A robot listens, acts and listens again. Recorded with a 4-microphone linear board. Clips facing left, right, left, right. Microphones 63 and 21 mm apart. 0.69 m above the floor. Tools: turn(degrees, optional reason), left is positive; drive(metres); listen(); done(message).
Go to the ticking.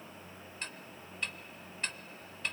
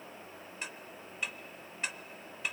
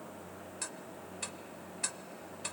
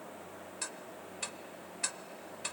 turn(degrees=-30)
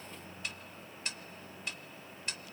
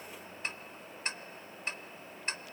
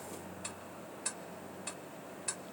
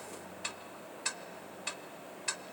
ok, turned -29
turn(degrees=-145, reason="So it is at 145° right.")
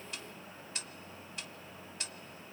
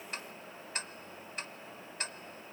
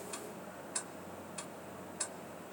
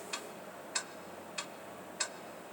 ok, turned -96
turn(degrees=-45, reason="The ticking is now 45° right.")
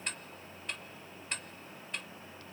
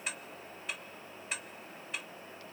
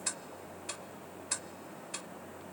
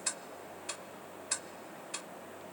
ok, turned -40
drive(metres=1.0)
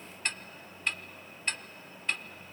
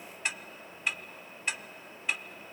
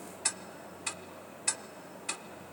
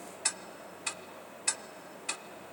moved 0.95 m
turn(degrees=-10, reason="The ticking is now 10° right.")
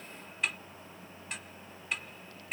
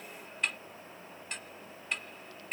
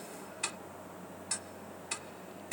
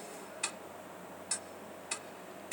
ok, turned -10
drive(metres=1.0)
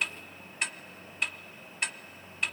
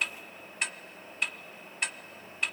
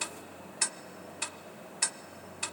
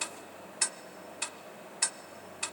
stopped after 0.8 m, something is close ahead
done("Arrived at the ticking, straight ahead.")